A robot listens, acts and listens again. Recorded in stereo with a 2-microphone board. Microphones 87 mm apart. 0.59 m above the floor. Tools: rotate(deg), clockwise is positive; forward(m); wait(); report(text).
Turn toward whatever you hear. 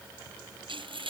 rotate(90)
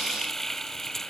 report("Facing the frying.")